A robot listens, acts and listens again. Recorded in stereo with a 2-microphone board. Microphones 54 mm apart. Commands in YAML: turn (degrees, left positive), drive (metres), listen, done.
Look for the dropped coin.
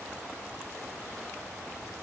listen: true
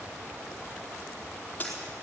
turn: 25
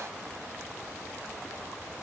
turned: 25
listen: true
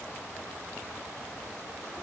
done: "I heard a dropped coin, but can't make it out now. It was about straight ahead or 130° left."